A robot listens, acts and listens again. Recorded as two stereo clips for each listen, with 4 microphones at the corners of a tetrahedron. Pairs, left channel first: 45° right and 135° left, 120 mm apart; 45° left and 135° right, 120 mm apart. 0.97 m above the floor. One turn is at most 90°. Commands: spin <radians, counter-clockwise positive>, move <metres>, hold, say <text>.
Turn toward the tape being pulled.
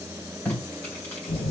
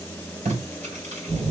spin -1.57
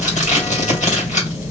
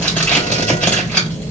spin -0.61
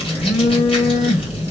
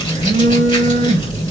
hold
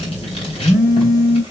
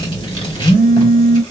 hold
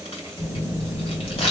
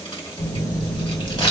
say I heard tape being pulled from this way, but can't make it out now.